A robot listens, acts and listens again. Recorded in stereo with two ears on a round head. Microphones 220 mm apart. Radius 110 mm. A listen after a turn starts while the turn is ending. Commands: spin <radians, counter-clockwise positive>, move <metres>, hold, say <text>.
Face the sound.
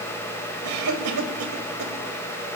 spin -1.57
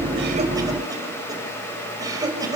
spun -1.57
spin -0.26
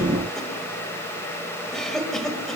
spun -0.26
say Facing the cough.